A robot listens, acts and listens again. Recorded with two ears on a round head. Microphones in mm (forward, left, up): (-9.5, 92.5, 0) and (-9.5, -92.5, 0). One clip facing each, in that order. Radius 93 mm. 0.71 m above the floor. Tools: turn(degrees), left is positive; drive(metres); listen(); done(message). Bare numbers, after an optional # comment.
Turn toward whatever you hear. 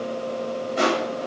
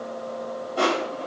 # The crushing: about 20° left or 160° left.
turn(20)
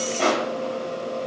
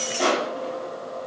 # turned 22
done("Found it: crushing, straight ahead, 2 to 4 m away.")